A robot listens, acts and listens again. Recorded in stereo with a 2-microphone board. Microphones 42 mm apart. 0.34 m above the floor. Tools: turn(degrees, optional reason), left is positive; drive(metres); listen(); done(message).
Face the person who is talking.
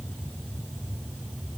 listen()
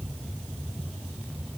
listen()
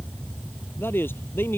turn(degrees=60, reason="The man speaking: about 60° left or 120° left.")
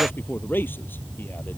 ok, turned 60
turn(degrees=60, reason="So it is at 60° left.")
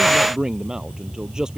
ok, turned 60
turn(degrees=-15, reason="The man speaking is now 15° right.")
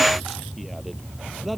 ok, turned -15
listen()
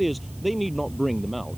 done("Found it: a man speaking, straight ahead.")